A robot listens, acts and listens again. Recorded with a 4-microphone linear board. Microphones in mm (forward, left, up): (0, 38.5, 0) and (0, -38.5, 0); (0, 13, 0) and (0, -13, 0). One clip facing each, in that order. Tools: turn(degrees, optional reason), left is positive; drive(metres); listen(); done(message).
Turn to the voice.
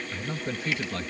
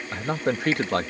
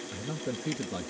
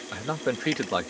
turn(degrees=-65, reason="The man speaking: about 65° right or 115° right.")
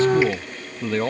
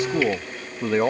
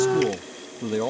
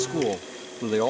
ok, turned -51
turn(degrees=-20, reason="So it is at 20° right.")
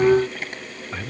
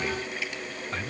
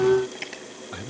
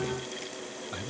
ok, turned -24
done("Found it: a man speaking, straight ahead.")